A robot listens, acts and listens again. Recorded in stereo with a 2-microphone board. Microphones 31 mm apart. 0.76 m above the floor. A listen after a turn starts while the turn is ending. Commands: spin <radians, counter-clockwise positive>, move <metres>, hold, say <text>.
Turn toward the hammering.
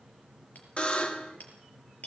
spin 1.05
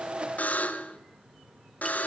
hold
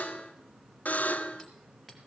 hold
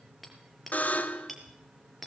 say Found it: hammering, straight ahead.